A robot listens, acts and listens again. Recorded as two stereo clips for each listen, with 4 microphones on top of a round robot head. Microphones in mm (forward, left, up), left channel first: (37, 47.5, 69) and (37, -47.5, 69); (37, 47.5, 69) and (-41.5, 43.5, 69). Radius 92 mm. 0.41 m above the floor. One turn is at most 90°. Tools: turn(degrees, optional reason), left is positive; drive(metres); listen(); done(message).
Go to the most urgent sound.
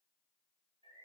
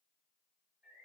listen()
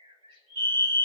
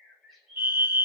turn(degrees=-90, reason="The fire alarm: 120° right.")
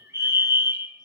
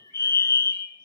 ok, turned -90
turn(degrees=-35, reason="The fire alarm is now 35° right.")
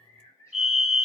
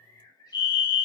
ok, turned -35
drive(metres=1.0)
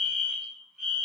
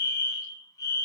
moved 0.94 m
drive(metres=1.0)
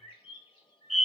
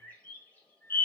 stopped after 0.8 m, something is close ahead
done("I am next to the fire alarm.")